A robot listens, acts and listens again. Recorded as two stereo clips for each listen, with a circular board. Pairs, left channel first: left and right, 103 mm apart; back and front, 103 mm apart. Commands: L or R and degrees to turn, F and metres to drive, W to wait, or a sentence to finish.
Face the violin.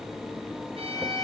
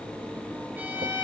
R75
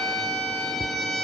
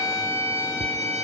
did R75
Facing the violin, over 4 m away.